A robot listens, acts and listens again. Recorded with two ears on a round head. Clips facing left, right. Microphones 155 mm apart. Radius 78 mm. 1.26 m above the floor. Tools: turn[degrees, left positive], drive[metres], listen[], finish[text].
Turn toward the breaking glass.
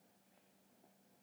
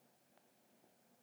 Action: listen[]
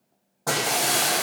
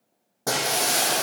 Thought: The breaking glass: about 25° right or 155° right.
Action: turn[-25]
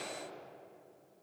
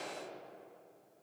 Action: listen[]
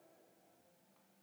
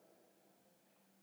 Action: finish[I heard breaking glass, but can't make it out now. It was about straight ahead or 130° right.]